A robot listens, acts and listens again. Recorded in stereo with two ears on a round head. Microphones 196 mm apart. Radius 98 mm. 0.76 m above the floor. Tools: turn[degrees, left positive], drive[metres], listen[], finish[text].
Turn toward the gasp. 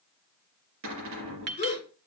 Thought: The gasp: about 30° left or 150° left.
Action: turn[30]
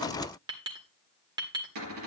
Action: listen[]
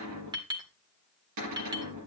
Action: finish[I heard a gasp, but can't make it out now. It was about straight ahead or 120° left.]